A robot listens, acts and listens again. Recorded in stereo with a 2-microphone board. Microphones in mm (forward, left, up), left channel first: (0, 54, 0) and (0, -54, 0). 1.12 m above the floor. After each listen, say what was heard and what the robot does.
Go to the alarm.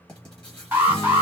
The alarm: about 15° right or 165° right. Turn 15° right.
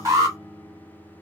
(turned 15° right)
So it is at 150° right. Turn 150° right.
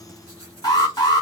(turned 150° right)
The alarm is now 45° left. Turn 45° left.
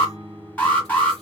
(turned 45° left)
The alarm is now 15° left. Turn 15° left.
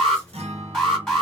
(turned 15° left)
Drive 1.0 m forward.
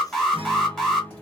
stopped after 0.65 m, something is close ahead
Arrived at the alarm, straight ahead.